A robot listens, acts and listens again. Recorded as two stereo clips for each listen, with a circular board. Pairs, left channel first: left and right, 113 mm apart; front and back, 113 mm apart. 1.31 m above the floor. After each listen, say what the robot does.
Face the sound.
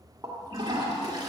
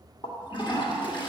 Turn 40° right.
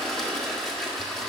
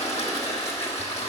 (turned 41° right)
Facing the toilet flushing, 1 to 2 m away.